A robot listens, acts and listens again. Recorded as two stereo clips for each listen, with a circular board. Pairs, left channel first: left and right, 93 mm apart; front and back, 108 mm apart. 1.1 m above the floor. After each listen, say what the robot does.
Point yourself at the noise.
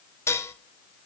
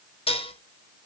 Turn 30° left.
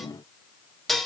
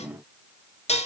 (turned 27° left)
Facing the dishes clattering.